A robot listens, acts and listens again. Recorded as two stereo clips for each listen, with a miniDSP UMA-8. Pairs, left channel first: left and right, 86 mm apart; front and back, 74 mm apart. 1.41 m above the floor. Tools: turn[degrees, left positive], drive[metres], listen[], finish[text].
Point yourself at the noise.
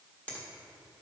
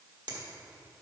Thought: The finger snap: 165° left.
Action: turn[165]
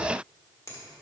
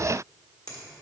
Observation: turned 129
Thought: The finger snap is now 35° left.
Action: turn[35]
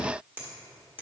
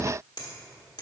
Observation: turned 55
Thought: The finger snap is now 20° right.
Action: turn[-20]
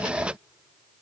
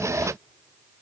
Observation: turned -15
Action: listen[]
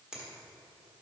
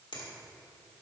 Action: finish[Found it: a finger snap, straight ahead.]